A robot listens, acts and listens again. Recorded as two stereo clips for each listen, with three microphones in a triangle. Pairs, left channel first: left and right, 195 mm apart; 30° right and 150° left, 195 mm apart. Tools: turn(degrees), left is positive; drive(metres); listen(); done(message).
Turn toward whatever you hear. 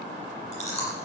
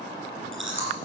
turn(degrees=145)
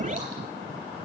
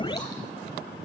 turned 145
listen()
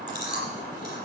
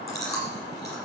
turn(degrees=45)
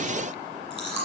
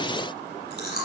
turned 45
done("Facing the chewing.")